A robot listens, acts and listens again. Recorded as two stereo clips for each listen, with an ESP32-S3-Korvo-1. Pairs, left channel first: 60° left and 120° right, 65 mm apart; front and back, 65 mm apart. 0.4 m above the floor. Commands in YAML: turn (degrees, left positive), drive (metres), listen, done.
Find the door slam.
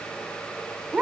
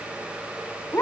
listen: true
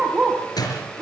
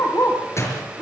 turn: 45
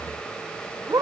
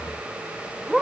done: "Facing where the door slam came from. I can't hear it now."